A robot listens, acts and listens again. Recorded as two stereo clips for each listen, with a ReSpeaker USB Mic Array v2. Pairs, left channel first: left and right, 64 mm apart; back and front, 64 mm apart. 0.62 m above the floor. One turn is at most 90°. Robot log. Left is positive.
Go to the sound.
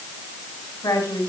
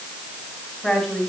note: The woman speaking: 100° left.
cmd yaw +90
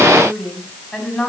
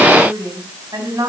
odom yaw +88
note: The woman speaking is now 10° left.
cmd yaw +10
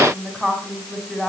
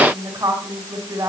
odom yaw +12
cmd fwd 1.0
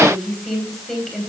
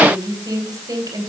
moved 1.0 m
cmd fwd 1.0
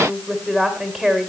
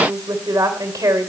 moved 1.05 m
cmd fwd 1.0
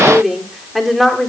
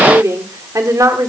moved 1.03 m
cmd fwd 1.0
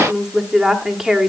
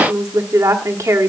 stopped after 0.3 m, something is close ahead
note: The woman speaking is now 10° right.
cmd yaw -10
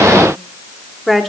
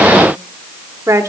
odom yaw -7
end: Arrived at the woman speaking, straight ahead.